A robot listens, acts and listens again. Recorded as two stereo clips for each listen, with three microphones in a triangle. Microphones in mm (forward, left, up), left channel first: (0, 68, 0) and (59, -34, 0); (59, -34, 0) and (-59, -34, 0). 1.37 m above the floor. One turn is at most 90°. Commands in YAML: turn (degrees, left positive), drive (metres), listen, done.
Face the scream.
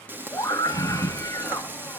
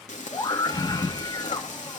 turn: 55
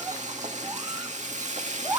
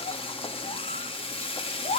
done: "Facing the scream."